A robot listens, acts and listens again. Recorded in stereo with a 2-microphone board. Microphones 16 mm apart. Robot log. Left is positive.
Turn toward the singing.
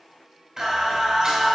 note: The singing: about 30° right or 150° right.
cmd yaw -30
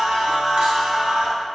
note: So it is at 120° right.
cmd yaw -120
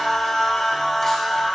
note: The singing is now 15° left.
cmd yaw +15
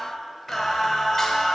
note: The singing is now 15° left.
cmd yaw +15
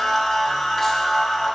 note: The singing is now 10° left.
cmd yaw +10
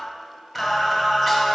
end: Facing the singing, 2 to 4 m away.